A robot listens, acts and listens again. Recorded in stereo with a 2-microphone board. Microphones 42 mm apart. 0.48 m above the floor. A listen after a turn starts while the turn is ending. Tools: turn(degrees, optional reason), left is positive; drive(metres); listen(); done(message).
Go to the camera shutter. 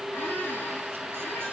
listen()
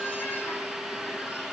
listen()
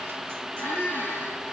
done("I can't make out a camera shutter to turn to.")